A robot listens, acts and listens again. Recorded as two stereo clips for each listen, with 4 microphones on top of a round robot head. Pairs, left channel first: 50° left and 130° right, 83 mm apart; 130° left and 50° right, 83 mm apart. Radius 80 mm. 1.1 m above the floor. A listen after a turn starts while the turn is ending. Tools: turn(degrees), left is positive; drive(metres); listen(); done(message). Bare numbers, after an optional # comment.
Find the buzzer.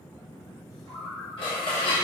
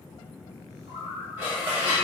listen()
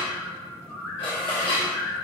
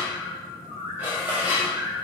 listen()
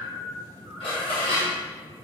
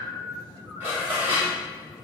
done("I can't make out a buzzer to turn to.")